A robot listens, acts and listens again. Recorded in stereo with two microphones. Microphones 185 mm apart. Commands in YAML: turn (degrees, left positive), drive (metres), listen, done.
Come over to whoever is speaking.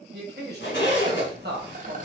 turn: -60
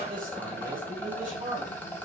turn: -50
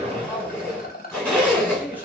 turn: -10
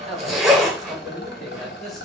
drive: 1.0
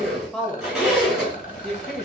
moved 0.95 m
drive: 1.0
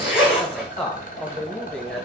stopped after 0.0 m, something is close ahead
done: "Arrived at the man speaking, straight ahead."